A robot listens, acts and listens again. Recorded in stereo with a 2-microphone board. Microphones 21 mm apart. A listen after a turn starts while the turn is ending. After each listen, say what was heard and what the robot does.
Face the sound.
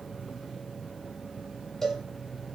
The cowbell: about 20° left or 160° left. Turn 20° left.
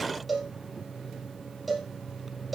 Facing the cowbell, 2 to 4 m away.